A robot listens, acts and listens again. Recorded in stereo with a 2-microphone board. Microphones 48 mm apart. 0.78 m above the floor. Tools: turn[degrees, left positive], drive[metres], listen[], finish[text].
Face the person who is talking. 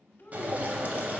Thought: The child speaking: about 45° left or 135° left.
Action: turn[45]
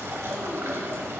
Action: listen[]
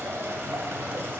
Action: listen[]
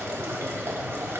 Action: finish[I heard a child speaking, but can't make it out now. It was about straight ahead or 90° left.]